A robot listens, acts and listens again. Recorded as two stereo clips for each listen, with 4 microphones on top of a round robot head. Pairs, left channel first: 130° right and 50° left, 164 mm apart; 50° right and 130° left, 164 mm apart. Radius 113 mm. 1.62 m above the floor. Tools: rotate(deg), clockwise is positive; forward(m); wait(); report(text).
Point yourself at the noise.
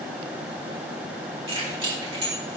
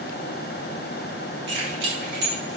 rotate(-110)
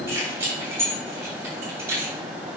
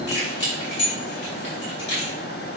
rotate(25)
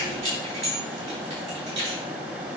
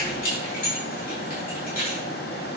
report("Found it: keys jangling, straight ahead.")